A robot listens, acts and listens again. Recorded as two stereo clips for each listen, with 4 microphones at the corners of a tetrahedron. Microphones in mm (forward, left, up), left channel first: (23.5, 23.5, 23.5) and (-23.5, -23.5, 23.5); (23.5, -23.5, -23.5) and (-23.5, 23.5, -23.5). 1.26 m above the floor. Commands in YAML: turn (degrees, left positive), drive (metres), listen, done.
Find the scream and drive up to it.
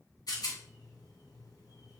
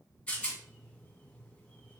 listen: true
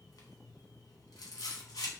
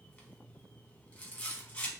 listen: true
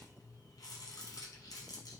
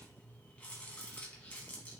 done: "I can't make out a scream, only a rattle."